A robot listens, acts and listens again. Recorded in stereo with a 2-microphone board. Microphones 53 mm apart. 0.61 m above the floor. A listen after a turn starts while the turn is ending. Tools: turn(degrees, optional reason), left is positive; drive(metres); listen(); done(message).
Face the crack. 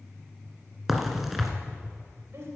turn(degrees=-30)
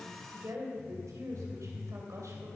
listen()
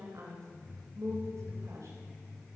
done("I heard a crack, but can't make it out now. It was about 25° left or 145° right.")